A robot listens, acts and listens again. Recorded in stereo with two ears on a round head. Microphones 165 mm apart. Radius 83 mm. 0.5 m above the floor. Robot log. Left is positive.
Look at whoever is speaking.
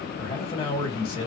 note: The man speaking: about 30° left or 150° left.
cmd yaw +30
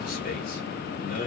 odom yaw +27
note: So it is at 115° left.
cmd yaw +115
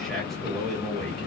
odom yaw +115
end: Facing the man speaking.